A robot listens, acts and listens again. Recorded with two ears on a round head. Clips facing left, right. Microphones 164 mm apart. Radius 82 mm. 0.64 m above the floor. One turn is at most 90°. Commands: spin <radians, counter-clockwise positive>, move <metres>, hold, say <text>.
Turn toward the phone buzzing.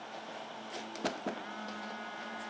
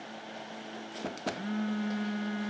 spin -0.79
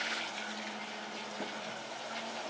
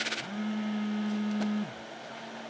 spin -1.57
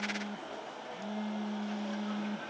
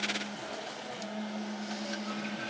say Facing the phone buzzing, 1 to 2 m away.